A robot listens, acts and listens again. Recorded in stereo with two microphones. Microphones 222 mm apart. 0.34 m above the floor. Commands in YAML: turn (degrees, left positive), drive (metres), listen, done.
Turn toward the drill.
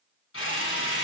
turn: 75
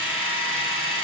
turn: 25
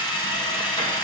turn: 20
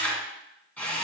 done: "Found it: a drill, straight ahead, 1 to 2 m away."